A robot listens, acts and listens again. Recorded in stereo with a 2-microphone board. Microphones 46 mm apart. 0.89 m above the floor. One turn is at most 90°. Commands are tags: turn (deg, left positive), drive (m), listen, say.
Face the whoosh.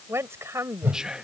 <turn deg="-50"/>
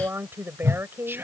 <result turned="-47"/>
<turn deg="-85"/>
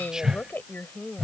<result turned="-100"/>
<turn deg="15"/>
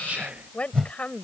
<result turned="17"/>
<say>Found it: a whoosh, straight ahead.</say>